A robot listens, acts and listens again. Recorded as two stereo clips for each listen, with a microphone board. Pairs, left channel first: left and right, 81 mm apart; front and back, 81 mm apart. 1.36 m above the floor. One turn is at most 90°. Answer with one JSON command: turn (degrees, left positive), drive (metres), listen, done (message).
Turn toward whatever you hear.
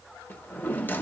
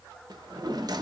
{"turn": 90}
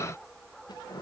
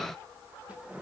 {"turn": 90}
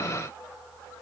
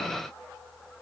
{"turn": 20}
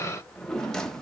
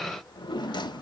{"turn": 10}
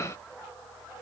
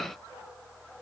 {"listen": true}
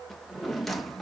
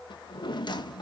{"done": "Found it: a drawer, straight ahead."}